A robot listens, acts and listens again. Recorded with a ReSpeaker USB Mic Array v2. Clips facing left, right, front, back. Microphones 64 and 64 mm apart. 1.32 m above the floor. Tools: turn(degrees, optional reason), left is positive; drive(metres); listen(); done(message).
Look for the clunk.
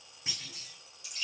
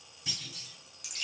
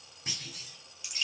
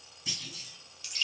turn(degrees=35, reason="The clunk: 35° left.")
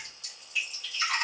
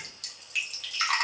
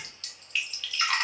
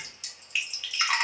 done("I heard a clunk from this way, but can't make it out now.")